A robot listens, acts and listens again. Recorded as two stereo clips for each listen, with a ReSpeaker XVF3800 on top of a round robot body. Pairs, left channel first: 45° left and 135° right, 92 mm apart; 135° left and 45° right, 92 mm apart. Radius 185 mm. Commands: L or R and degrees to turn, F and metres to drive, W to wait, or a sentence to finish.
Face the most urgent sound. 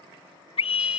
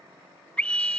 L55
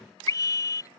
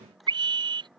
R10
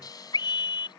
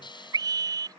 Found it: a scream, straight ahead.